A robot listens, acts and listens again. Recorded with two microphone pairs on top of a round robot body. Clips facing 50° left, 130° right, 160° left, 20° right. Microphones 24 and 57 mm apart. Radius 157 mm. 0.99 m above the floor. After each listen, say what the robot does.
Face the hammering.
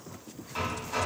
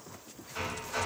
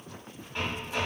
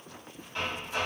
Turn 80° left.
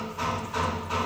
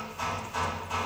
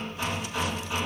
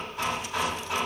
Found it: hammering, straight ahead, 1 to 2 m away.